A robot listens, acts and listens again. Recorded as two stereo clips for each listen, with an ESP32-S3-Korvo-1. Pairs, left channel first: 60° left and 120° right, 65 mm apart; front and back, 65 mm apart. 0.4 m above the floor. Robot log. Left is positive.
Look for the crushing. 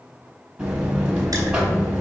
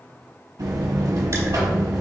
cmd idle
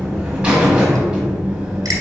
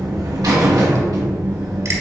cmd idle
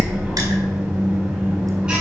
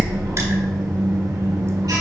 end: I can't make out crushing to turn to.